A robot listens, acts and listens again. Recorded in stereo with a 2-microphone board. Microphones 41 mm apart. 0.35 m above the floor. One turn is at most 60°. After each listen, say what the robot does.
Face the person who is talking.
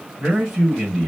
Turn 30° left.
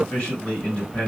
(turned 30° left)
Turn 60° left.
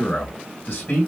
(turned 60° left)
Turn 55° left.
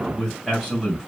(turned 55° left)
Turn 10° right.
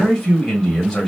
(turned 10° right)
Found it: a man speaking, straight ahead.